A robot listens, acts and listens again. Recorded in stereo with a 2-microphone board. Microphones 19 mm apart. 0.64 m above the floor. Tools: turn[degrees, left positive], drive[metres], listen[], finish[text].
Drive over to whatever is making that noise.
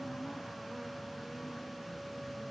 Action: listen[]
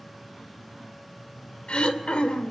Thought: The throat clearing: about 65° left or 115° left.
Action: turn[65]
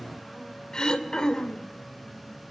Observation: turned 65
Thought: So it is at 40° left.
Action: turn[40]
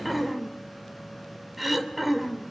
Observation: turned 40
Thought: The throat clearing is now 10° right.
Action: turn[-10]
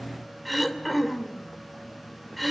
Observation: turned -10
Action: drive[1.0]
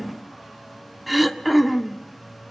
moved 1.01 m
Thought: The throat clearing is now 10° right.
Action: turn[-10]
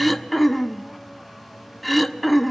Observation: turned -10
Action: drive[1.0]
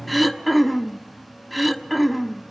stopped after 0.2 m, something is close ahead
Action: finish[I am next to the throat clearing.]